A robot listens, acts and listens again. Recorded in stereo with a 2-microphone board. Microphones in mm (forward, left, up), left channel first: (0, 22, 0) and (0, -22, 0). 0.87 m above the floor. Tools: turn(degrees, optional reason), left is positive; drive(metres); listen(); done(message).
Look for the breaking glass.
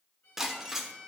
turn(degrees=-30)
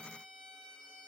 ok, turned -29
listen()
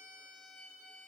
done("I heard breaking glass, but can't make it out now. It was about 20° left or 140° right.")